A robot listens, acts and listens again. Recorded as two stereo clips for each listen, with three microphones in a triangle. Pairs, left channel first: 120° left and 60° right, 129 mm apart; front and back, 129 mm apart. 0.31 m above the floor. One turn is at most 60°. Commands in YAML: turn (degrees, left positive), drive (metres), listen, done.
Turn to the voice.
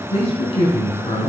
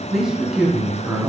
turn: 60
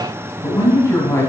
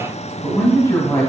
turn: 55
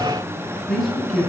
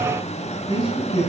turn: 35
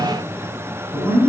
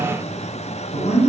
done: "Found it: a man speaking, straight ahead, 2 to 4 m away."